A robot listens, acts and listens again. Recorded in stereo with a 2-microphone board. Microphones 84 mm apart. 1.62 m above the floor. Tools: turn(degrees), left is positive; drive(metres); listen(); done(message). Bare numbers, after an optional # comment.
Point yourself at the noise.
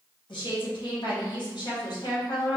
# The woman speaking: about 55° left or 125° left.
turn(55)
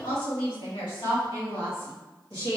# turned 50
# So it is at 85° left.
turn(85)
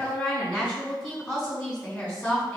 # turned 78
# The woman speaking is now 20° left.
turn(20)
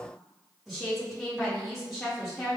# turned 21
done("Facing the woman speaking.")